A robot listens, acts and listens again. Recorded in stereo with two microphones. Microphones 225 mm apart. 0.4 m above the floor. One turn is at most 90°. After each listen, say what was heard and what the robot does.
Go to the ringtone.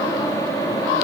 Keep listening.
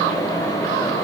Keep listening.
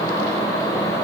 I can't make out a ringtone to turn to.